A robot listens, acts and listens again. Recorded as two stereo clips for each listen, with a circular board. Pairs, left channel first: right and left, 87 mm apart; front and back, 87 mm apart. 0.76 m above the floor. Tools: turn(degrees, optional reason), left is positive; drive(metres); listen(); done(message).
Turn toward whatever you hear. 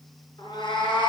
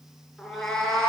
turn(degrees=-85, reason="The cat meowing: 85° right.")
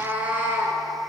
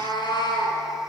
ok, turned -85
turn(degrees=25, reason="The cat meowing is now 25° left.")
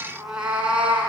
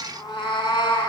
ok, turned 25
turn(degrees=20, reason="The cat meowing is now 20° left.")
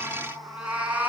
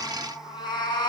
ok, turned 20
turn(degrees=25, reason="The cat meowing is now 25° left.")
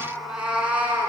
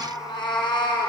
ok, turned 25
turn(degrees=20, reason="The cat meowing is now 20° left.")
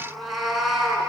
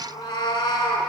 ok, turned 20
done("Found it: a cat meowing, straight ahead, 1 to 2 m away.")